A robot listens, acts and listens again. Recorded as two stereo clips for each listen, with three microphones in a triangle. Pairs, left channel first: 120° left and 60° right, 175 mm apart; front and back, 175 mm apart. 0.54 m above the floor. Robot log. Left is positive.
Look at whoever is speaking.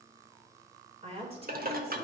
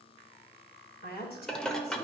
note: The woman speaking: 10° right.
cmd yaw -10
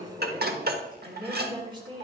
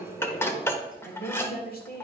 end: Facing the woman speaking, 2 to 4 m away.